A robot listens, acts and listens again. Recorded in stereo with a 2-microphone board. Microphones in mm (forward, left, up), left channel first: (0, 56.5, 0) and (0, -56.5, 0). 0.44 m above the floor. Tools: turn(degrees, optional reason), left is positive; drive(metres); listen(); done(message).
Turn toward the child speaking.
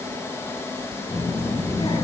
turn(degrees=40, reason="The child speaking: about 40° left or 140° left.")
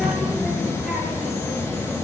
done("Facing the child speaking, over 4 m away.")